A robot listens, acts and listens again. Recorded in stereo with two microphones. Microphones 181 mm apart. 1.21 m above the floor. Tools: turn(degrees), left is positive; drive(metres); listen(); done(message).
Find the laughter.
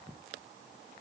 listen()
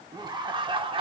turn(degrees=-30)
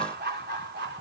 turn(degrees=-110)
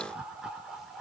done("Facing the laughter.")